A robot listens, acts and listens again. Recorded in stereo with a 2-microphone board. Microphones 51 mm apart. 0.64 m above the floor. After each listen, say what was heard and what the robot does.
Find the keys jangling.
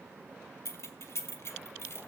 The keys jangling: about 55° left or 125° left. Turn 55° left.
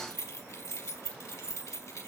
So it is at 80° left. Turn 80° left.
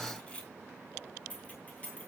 The keys jangling is now 25° left. Turn 25° left.
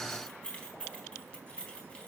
The keys jangling is now 20° left. Turn 20° left.
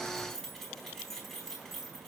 Facing the keys jangling.